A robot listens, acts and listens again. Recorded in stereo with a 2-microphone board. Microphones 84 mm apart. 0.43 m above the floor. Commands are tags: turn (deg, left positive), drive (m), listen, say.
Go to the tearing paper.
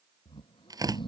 <turn deg="-50"/>
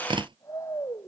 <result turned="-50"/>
<turn deg="-80"/>
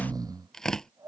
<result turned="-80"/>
<drive m="1.0"/>
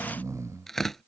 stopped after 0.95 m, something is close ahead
<say>Blocked. The tearing paper is further on, straight ahead.</say>